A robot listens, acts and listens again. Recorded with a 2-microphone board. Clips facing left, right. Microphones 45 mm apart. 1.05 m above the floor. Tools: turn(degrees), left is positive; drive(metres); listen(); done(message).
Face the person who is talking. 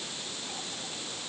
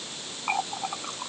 listen()
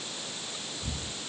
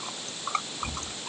listen()
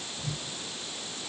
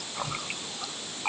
done("I can't make out anyone speaking, only a running tap.")